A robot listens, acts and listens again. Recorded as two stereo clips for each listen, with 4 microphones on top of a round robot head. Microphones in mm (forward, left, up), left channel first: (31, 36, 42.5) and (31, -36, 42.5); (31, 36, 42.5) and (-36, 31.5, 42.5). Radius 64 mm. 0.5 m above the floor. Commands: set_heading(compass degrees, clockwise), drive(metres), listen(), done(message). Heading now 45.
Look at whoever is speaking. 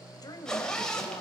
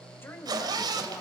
set_heading(355)
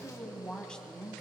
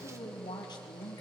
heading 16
set_heading(6)
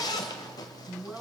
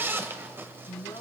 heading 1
set_heading(11)
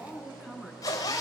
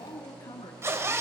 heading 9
done("Found it: a woman speaking, straight ahead, over 4 m away.")